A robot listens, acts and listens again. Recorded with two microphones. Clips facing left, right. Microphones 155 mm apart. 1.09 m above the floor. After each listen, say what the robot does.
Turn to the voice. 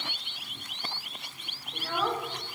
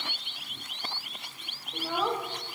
Turn 30° right.
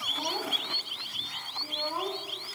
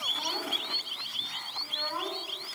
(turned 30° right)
Turn 20° left.
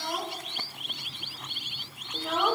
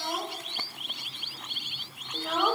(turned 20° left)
Facing the child speaking, 2 to 4 m away.